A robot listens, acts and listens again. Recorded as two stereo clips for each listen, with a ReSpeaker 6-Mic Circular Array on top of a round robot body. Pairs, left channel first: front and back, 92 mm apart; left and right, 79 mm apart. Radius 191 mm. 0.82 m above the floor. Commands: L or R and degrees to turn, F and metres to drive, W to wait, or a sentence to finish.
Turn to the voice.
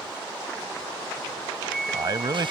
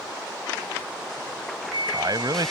R130
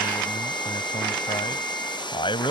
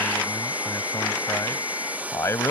L30
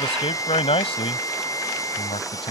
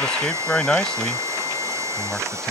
L10
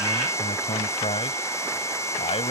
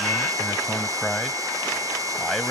Facing the man speaking.